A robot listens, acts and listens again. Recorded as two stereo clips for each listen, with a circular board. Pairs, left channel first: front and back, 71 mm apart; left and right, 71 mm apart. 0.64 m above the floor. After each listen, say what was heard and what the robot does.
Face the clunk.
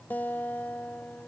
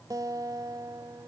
Keep listening.
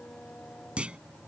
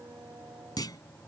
The clunk: 105° left. Turn 105° left.
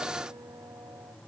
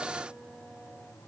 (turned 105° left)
I heard a clunk from this way, but can't make it out now.